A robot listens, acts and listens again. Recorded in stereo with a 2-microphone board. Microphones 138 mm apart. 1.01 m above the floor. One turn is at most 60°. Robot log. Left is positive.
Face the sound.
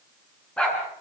cmd yaw +30
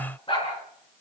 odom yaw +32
note: So it is at 140° left.
cmd yaw +60
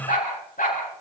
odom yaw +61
note: The dog barking is now 75° left.
cmd yaw +60
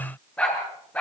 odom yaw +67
note: The dog barking is now 10° left.
cmd yaw +10
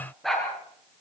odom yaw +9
end: Found it: a dog barking, straight ahead.